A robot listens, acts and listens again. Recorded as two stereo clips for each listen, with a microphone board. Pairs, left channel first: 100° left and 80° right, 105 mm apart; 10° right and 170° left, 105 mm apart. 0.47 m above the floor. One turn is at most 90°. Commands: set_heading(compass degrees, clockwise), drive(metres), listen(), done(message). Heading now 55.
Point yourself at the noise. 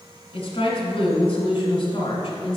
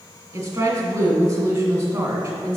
set_heading(325)
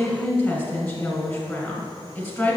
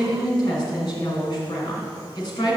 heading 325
set_heading(295)
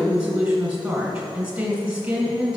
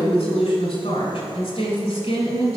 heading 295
done("Found it: a woman speaking, straight ahead, 1 to 2 m away.")